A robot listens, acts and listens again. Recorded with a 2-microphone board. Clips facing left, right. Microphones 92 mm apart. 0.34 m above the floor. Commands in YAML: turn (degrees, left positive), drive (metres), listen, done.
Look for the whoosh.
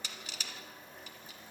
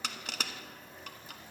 listen: true
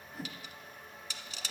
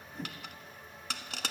turn: 30
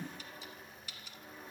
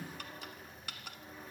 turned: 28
turn: 145
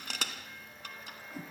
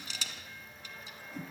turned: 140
done: "Facing the whoosh, 1 to 2 m away."